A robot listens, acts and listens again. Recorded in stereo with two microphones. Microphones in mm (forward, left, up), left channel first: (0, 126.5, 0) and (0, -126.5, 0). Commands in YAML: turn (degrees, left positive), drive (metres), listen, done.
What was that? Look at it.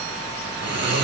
turn: -90
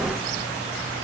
listen: true
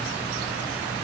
listen: true
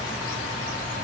done: "I heard snoring from this way, but can't make it out now."